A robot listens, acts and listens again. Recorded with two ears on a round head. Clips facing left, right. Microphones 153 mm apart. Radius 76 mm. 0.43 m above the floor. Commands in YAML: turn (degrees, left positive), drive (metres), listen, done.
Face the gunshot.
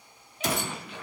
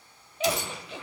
turn: 45
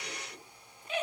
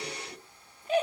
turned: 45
listen: true
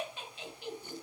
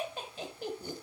done: "I heard a gunshot, but can't make it out now. It was about straight ahead or 90° left."